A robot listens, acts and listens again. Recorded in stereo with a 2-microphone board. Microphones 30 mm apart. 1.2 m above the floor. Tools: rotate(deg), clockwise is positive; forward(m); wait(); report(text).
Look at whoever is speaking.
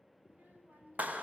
rotate(90)
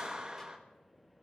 wait()
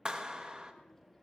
wait()
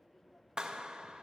report("I heard a child speaking from this way, but can't make it out now.")